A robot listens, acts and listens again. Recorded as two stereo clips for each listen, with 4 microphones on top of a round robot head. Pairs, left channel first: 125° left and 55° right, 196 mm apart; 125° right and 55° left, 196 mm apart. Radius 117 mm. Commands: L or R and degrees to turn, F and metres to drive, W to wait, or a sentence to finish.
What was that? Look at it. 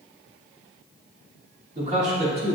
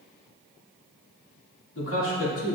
R115
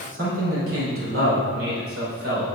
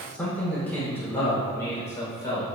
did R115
R50
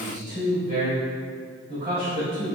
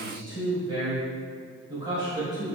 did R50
R10
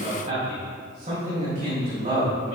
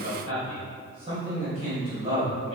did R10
Found it: a man speaking, straight ahead.